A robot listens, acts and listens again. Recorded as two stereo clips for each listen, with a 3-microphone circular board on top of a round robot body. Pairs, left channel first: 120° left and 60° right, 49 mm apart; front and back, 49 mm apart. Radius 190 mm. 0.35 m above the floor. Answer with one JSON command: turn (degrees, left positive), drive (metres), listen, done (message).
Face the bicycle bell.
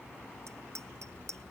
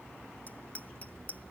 {"turn": -60}
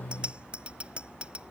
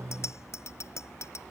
{"done": "Facing the bicycle bell."}